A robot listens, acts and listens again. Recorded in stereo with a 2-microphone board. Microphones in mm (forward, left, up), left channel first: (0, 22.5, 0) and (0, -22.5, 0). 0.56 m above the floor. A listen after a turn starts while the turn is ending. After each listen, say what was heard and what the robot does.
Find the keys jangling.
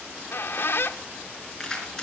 Turn 30° left.
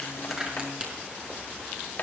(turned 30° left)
So it is at 20° right. Turn 20° right.
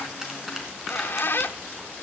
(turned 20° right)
Keep listening.
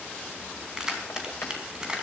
The keys jangling is now 20° right. Turn 20° right.
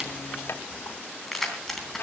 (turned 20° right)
Found it: keys jangling, straight ahead, 2 to 4 m away.